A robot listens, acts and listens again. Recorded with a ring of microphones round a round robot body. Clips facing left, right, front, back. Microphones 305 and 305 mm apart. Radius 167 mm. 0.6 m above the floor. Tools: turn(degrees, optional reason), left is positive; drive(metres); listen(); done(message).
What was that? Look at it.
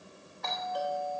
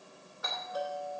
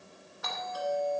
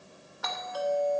turn(degrees=-170, reason="The doorbell: 170° right.")
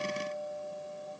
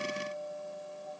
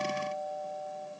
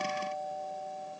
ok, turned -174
done("Facing the doorbell, 2 to 4 m away.")